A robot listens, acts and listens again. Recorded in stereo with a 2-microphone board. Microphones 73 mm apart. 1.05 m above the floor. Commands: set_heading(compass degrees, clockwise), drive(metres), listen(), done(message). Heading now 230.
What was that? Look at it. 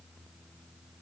listen()
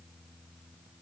listen()
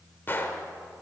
set_heading(200)
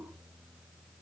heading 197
listen()
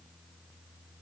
done("I heard a gunshot, but can't make it out now. It was about straight ahead or 115° left.")